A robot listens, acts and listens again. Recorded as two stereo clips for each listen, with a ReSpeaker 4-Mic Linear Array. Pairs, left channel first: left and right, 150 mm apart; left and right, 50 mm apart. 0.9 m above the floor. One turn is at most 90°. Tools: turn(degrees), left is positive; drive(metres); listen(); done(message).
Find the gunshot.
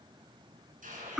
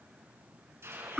turn(degrees=-60)
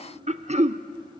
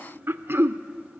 listen()
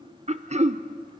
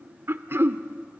done("I heard a gunshot, but can't make it out now. It was about straight ahead or 60° right.")